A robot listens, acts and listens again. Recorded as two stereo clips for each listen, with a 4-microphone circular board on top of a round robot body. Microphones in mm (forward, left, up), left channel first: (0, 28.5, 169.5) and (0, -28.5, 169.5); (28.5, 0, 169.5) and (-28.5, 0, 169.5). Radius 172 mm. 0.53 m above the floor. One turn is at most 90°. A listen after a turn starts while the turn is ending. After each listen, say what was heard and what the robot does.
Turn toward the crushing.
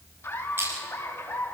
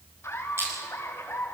The crushing: 140° right. Turn 90° right.
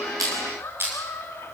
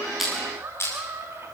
The crushing is now 40° right. Turn 40° right.
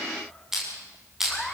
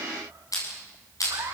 Found it: crushing, straight ahead, over 4 m away.